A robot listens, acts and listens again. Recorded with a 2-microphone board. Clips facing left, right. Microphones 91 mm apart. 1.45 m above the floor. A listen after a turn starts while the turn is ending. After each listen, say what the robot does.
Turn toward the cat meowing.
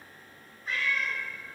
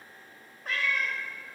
Turn 65° right.
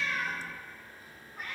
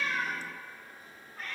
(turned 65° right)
Turn 15° left.
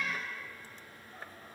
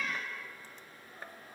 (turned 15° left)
Facing the cat meowing.